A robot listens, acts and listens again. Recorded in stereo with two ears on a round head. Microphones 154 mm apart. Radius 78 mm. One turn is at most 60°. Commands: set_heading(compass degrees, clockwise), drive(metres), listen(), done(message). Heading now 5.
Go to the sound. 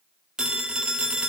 set_heading(35)
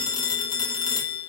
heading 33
set_heading(8)
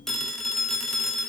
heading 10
drive(1.0)
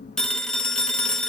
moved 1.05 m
drive(1.0)
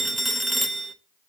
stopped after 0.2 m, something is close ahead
done("I am next to the phone ringing.")